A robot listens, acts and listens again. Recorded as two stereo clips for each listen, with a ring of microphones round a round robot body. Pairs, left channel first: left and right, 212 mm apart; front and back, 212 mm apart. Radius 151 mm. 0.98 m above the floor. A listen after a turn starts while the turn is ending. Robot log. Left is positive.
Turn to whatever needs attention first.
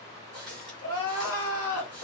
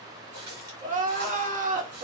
note: The crying: 125° left.
cmd yaw +125
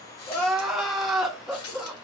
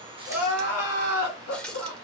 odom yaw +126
end: Found it: crying, straight ahead.